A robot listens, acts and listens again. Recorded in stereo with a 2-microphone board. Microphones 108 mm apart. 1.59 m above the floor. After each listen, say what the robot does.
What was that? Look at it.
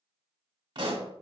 Turn 50° right.
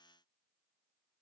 Keep listening.
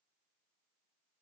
I heard a pop, but can't make it out now. It was about straight ahead or 80° right.